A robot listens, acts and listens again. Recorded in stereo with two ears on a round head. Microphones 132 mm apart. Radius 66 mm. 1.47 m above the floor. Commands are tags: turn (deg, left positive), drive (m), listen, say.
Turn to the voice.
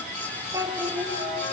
<turn deg="-30"/>
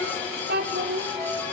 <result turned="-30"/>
<turn deg="-105"/>
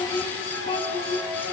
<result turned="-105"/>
<turn deg="35"/>
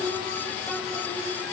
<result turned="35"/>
<say>Facing the child speaking.</say>